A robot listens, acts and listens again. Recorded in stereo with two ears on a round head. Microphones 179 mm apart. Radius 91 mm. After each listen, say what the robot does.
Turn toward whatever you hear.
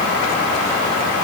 Keep listening.
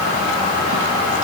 Keep listening.
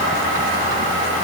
I can't make out anything.